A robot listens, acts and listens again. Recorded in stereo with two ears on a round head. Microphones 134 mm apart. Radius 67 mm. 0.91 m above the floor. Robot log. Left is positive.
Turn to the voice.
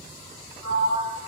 cmd idle
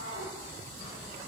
cmd idle
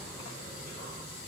end: I can't make out anyone speaking to turn to.